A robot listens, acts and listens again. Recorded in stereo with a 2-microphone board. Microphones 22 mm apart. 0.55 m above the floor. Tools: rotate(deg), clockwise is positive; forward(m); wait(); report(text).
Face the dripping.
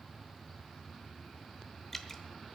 rotate(-30)
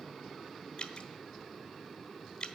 rotate(-130)
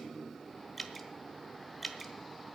report("Found it: dripping, straight ahead.")